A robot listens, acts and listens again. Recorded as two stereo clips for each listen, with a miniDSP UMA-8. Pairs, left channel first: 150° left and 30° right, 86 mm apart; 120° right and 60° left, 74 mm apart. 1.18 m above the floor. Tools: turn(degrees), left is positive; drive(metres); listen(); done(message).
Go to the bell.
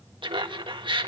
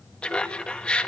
listen()
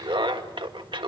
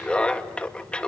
listen()
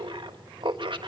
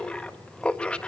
done("I can't make out a bell to turn to.")